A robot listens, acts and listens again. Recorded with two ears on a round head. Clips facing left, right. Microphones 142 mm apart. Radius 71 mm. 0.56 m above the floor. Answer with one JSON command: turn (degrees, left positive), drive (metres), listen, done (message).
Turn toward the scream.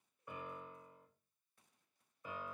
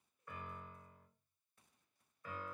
{"listen": true}
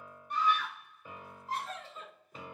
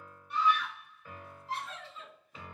{"turn": 40}
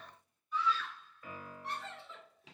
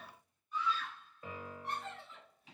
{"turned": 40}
{"turn": 90}
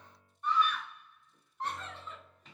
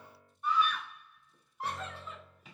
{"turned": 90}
{"turn": -10}
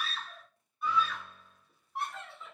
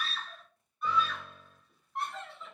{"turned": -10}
{"done": "Found it: a scream, straight ahead."}